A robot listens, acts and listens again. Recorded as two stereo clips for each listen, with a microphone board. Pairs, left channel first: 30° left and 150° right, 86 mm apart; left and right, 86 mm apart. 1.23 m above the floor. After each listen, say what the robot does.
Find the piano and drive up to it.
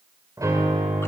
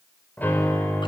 Turn 160° left.
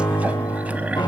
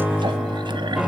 Drive 1.0 m forward.
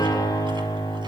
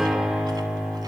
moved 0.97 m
Drive 1.0 m forward.
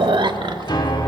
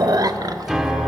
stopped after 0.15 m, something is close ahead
Blocked. The piano is further on, straight ahead.